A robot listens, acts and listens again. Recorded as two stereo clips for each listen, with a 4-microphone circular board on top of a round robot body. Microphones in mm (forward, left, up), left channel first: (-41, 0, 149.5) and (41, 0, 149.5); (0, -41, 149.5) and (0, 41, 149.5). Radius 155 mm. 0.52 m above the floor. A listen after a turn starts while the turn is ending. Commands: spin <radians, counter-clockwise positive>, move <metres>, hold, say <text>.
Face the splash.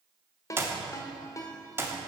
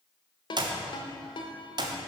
hold
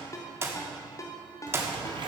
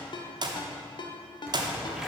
say Found it: a splash, straight ahead.